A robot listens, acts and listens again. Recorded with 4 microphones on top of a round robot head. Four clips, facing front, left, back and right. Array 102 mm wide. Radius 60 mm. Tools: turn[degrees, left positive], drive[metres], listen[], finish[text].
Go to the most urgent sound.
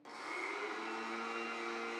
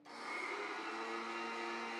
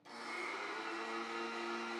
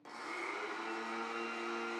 Action: listen[]
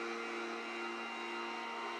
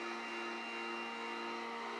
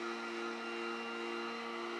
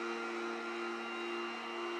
Action: listen[]
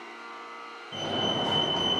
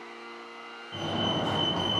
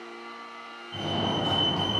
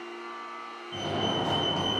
Action: drive[1.0]
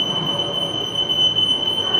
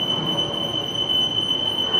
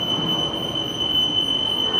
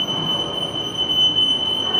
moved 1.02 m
Thought: The fire alarm is now 20° right.
Action: turn[-20]
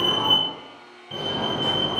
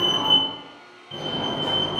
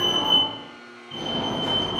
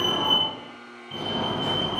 Action: drive[1.0]
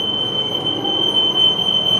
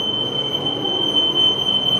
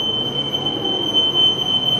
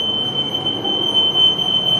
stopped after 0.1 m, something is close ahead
Action: finish[I am next to the fire alarm.]